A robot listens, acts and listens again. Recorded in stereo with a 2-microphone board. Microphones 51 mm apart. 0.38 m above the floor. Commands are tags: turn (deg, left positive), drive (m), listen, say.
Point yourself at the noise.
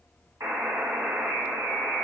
<turn deg="-70"/>
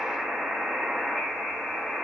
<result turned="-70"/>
<say>Found it: a buzzer, straight ahead.</say>